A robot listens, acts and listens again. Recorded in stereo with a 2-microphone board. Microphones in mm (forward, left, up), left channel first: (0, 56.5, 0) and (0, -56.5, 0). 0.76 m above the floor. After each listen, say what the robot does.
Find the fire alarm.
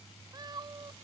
Keep listening.
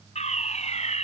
Turn 90° left.
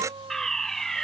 Facing the fire alarm.